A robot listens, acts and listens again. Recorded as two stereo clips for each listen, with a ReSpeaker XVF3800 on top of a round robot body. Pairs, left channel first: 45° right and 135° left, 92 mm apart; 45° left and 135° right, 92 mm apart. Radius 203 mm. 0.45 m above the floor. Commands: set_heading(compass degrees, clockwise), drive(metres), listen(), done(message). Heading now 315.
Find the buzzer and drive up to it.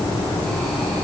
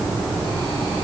listen()
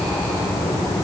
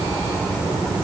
listen()
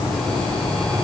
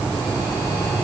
done("I can't make out a buzzer.")